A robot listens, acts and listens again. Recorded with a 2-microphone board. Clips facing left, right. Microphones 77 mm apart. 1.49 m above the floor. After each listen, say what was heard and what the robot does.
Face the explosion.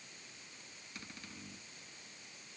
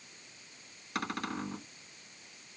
Keep listening.
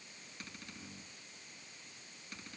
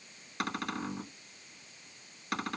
Keep listening.
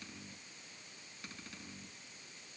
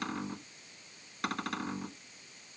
I can't make out an explosion to turn to.